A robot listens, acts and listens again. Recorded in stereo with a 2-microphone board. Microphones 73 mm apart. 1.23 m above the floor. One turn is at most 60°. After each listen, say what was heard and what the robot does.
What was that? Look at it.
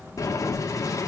The boiling: about 50° left or 130° left. Turn 50° left.
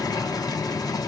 So it is at 75° left. Turn 60° left.
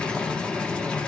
The boiling is now 15° left. Turn 15° left.
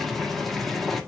Facing the boiling, 1 to 2 m away.